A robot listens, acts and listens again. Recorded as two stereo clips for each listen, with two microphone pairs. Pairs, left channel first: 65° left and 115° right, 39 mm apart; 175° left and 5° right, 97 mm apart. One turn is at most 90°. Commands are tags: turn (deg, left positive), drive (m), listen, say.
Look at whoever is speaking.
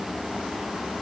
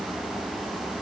<listen/>
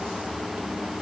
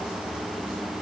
<listen/>
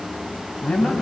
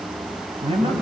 <say>Found it: a man speaking, straight ahead, 2 to 4 m away.</say>